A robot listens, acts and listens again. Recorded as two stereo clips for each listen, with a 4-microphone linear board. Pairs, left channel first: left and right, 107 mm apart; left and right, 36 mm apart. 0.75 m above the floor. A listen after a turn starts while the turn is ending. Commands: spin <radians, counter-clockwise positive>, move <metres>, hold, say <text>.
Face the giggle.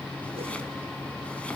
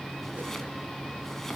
hold
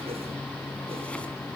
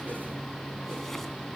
hold
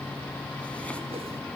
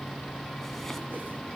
say I can't make out a giggle.